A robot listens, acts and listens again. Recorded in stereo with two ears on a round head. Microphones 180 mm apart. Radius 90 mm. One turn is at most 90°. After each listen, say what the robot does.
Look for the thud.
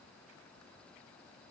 Keep listening.
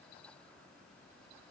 Keep listening.
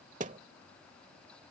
Turn 40° right.
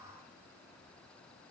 Keep listening.
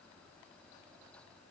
I heard a thud, but can't make it out now. It was about straight ahead or 100° right.